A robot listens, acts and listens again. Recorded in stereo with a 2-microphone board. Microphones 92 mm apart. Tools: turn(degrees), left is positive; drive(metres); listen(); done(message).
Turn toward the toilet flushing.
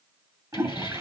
turn(degrees=-35)
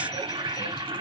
turn(degrees=-115)
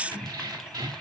listen()
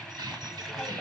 done("Facing the toilet flushing.")